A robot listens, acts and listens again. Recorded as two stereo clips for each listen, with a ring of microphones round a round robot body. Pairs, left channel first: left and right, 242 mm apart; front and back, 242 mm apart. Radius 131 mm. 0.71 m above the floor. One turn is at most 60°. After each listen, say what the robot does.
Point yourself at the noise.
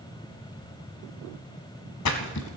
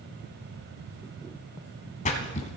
Turn 60° left.
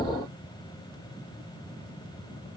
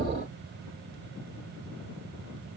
Facing where the splash came from. I can't hear it now.